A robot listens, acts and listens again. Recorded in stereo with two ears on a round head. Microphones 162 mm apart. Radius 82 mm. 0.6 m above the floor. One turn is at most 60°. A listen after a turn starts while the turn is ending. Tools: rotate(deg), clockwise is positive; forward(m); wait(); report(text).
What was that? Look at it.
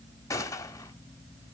rotate(-15)
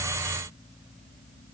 wait()
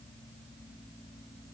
report("I heard a gunshot, but can't make it out now. It was about straight ahead or 150° left.")